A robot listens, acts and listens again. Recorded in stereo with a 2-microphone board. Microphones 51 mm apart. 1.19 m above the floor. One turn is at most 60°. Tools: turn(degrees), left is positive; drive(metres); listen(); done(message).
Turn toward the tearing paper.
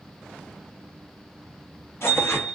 turn(degrees=55)
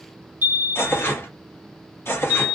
turn(degrees=60)
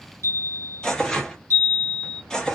turn(degrees=15)
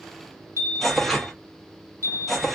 done("Facing the tearing paper, under 1 m away.")